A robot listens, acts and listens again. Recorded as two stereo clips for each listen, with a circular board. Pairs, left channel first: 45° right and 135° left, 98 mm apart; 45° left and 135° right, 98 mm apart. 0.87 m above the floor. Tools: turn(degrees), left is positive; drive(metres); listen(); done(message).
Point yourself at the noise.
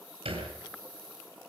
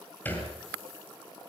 turn(degrees=115)
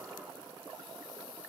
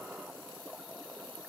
done("I heard a thud from this way, but can't make it out now.")